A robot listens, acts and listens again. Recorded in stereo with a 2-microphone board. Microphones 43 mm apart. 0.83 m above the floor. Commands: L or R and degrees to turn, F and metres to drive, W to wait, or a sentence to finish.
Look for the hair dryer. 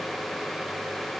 W
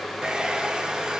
R20
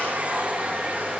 R140
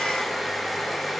Facing the hair dryer.